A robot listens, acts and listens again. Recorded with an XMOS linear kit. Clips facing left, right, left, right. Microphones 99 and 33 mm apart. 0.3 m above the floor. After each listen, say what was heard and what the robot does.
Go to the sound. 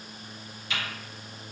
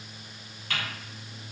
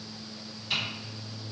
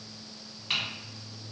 The typing on a keyboard: about 60° right or 120° right. Turn 60° right.
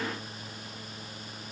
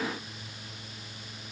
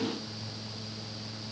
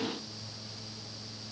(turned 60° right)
Keep listening.
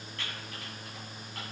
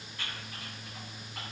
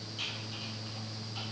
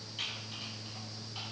So it is at 15° right. Turn 15° right.
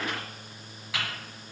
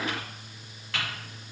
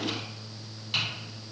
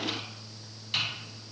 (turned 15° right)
Drive 1.0 m forward.
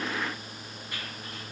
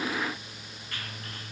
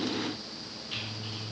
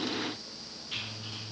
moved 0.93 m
The typing on a keyboard is now 15° left. Turn 15° left.
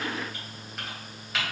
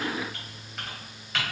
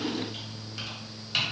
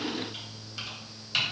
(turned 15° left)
Drive 1.0 m forward.
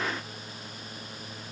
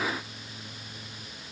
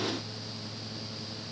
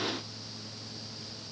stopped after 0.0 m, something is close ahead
Keep listening.
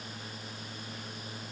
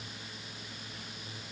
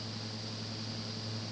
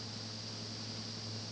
Keep listening.
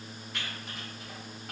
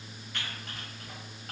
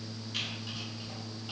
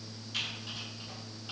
Arrived at the typing on a keyboard, straight ahead.